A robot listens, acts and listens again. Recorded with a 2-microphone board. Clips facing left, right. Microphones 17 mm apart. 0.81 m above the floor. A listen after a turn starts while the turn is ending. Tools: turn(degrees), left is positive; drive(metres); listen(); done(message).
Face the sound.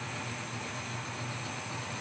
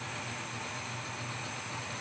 listen()
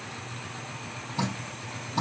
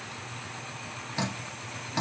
turn(degrees=-45)
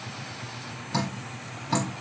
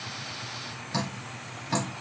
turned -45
done("Facing the dripping, 2 to 4 m away.")